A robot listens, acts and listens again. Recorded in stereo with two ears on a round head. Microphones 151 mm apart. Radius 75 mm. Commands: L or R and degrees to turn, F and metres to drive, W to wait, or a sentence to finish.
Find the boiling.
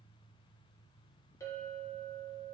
W
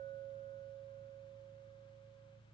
W
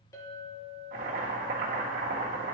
R55
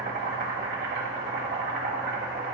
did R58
R65
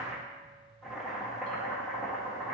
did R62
Facing the boiling, 1 to 2 m away.